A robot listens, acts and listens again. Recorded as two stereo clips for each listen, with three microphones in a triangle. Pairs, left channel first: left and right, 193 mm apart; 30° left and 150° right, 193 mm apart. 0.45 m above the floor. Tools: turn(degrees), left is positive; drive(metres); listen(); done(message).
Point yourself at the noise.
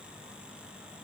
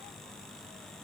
listen()
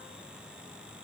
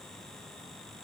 listen()
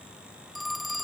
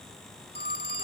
done("Facing the phone ringing.")